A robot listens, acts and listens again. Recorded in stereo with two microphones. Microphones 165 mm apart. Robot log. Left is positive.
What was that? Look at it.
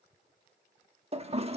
note: The toilet flushing: about 40° right or 140° right.
cmd yaw -40
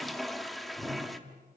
end: Found it: a toilet flushing, straight ahead, 1 to 2 m away.